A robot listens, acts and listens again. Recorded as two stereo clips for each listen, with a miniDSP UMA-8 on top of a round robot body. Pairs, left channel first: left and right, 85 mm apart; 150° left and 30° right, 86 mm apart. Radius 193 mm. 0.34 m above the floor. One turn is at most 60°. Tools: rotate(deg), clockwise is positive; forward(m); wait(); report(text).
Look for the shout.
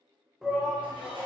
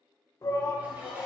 rotate(60)
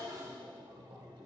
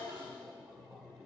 rotate(60)
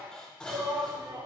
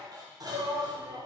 rotate(60)
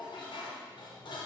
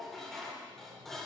report("Found it: a shout, straight ahead.")